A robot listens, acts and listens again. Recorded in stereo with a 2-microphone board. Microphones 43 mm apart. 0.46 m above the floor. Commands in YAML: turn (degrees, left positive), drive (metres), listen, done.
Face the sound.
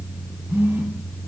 turn: -60
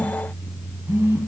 turn: -55
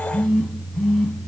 done: "Found it: a phone buzzing, straight ahead."